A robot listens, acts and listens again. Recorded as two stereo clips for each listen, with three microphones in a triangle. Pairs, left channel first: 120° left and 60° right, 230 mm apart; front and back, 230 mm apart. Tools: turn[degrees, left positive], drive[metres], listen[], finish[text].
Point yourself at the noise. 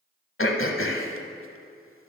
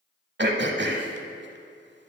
Thought: The throat clearing: 145° left.
Action: turn[145]
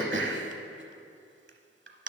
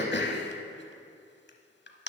Thought: The throat clearing is now 35° right.
Action: turn[-35]
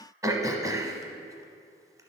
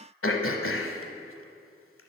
Thought: The throat clearing is now 15° left.
Action: turn[15]
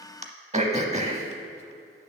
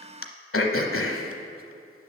Action: finish[Found it: throat clearing, straight ahead.]